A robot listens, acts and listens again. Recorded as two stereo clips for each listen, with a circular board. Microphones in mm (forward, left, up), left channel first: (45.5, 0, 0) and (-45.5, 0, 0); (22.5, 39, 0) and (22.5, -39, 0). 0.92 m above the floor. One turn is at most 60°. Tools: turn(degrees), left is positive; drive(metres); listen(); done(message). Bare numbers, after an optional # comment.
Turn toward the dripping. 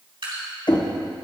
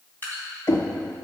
# The dripping: 155° left.
turn(60)
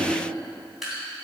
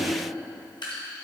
# The dripping is now 90° left.
turn(60)
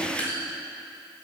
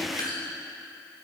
# The dripping is now 70° left.
turn(60)
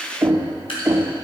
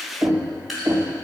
done("Found it: dripping, straight ahead.")